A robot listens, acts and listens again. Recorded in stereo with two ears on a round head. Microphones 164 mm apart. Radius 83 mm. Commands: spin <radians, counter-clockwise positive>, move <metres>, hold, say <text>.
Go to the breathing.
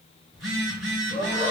spin 0.79
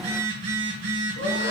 hold
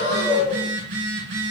spin 1.57
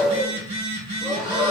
move 1.0
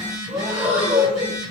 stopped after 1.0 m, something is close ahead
spin -0.17
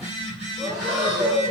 say I am next to the breathing.